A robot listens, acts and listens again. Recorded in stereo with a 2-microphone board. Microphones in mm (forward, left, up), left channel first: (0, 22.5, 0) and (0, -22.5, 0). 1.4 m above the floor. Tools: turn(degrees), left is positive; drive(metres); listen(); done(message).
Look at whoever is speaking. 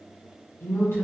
turn(degrees=70)
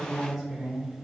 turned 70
done("Facing the woman speaking, under 1 m away.")